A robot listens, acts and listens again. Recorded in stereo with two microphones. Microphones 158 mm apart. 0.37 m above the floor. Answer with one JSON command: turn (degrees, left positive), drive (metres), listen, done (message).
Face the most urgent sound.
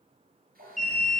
{"turn": -50}
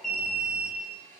{"done": "Found it: an alarm, straight ahead."}